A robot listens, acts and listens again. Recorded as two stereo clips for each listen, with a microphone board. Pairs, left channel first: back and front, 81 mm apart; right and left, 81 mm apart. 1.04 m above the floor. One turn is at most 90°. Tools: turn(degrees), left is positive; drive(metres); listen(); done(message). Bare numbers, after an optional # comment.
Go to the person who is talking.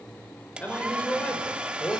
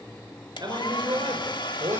# The man speaking: 110° left.
turn(90)
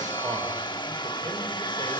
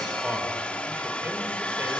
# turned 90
# Nothing new. It was at 20° left.
turn(20)
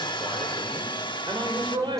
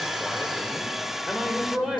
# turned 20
drive(1.0)
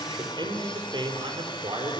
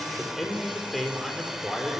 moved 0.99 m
drive(1.0)
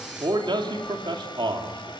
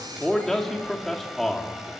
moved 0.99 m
drive(1.0)
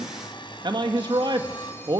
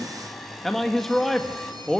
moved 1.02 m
drive(1.0)
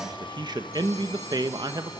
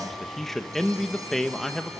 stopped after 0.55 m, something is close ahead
done("I am next to the man speaking.")